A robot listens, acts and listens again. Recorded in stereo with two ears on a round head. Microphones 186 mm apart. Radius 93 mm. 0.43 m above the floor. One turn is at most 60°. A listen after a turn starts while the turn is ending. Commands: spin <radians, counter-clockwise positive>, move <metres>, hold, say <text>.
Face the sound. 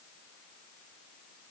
hold
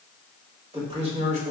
spin -0.61
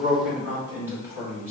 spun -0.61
spin -0.26
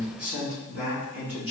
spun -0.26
spin -0.17
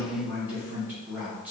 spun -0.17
spin -0.17
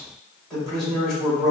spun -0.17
say Facing the man speaking.